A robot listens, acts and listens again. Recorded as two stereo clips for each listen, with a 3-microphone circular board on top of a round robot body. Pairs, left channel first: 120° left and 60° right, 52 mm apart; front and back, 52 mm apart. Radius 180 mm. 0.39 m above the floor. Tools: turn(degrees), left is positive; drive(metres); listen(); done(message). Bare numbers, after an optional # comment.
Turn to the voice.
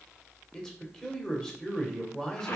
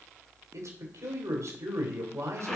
# The man speaking: 160° right.
turn(-160)
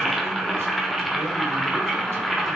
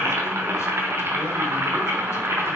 listen()
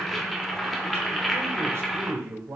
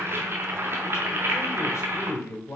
# The man speaking is now 25° right.
turn(-25)
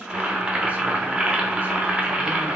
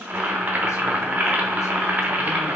listen()
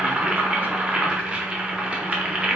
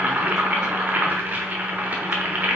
listen()
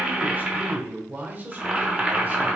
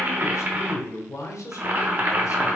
done("Facing the man speaking.")